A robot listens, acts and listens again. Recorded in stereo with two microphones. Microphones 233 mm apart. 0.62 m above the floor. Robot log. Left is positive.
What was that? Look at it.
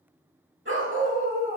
note: The dog barking: about 55° right or 125° right.
cmd yaw -55
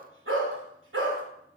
note: So it is at 60° right.
cmd yaw -60
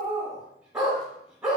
end: Found it: a dog barking, straight ahead.